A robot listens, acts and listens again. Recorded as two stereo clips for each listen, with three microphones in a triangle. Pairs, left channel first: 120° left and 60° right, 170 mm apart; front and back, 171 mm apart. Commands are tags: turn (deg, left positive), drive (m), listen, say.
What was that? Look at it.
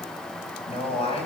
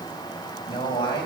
<turn deg="65"/>
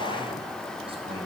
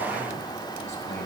<say>Found it: a man speaking, straight ahead, over 4 m away.</say>